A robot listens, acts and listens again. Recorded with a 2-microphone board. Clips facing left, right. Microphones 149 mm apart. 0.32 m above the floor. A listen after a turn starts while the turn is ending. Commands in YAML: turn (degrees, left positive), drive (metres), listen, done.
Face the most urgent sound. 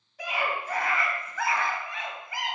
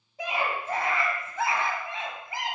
turn: -25
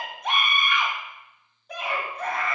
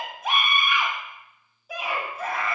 done: "Facing the scream."